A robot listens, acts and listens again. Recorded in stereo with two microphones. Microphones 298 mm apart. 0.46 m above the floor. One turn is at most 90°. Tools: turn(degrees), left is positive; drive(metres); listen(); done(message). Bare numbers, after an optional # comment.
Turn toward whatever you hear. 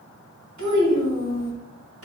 # The child speaking: about 50° right or 130° right.
turn(-50)
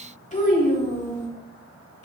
# So it is at 55° left.
turn(55)
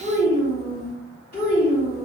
# The child speaking is now 25° left.
turn(25)
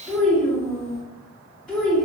done("Facing the child speaking.")